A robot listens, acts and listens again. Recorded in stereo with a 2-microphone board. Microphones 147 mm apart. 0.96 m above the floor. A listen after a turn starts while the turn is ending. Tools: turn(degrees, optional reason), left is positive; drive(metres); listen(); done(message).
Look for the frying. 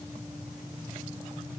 listen()
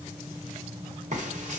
turn(degrees=-55, reason="The frying: about 55° right or 125° right.")
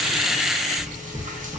turn(degrees=-70, reason="So it is at 70° right.")
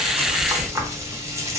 turn(degrees=-20, reason="The frying is now 20° right.")
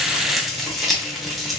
done("Facing the frying, under 1 m away.")